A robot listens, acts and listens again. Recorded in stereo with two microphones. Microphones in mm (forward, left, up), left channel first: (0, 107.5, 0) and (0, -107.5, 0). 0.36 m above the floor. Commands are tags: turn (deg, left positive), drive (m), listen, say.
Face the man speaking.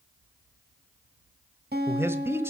<turn deg="-30"/>
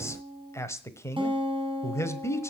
<turn deg="15"/>
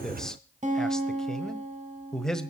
<say>Facing the man speaking, 1 to 2 m away.</say>